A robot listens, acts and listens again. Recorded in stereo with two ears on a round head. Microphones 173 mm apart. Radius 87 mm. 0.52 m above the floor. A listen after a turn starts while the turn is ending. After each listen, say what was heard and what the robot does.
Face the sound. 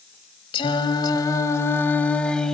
Turn 30° left.
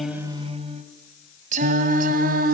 So it is at 50° right. Turn 50° right.
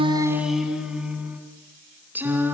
The singing is now 10° right. Turn 10° right.
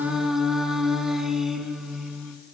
Facing the singing, 2 to 4 m away.